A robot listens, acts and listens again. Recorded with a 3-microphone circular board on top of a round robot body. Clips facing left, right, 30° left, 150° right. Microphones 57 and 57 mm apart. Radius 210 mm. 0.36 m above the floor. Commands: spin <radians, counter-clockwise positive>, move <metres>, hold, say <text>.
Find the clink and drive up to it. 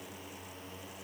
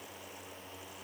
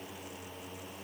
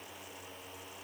hold
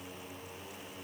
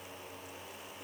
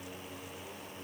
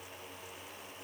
hold
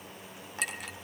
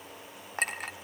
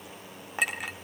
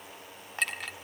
spin -0.87
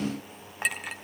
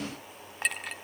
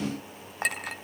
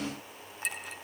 move 1.0
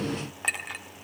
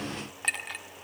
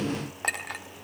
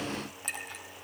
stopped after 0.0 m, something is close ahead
say Something is in my way. I am facing the clink but have not reached it.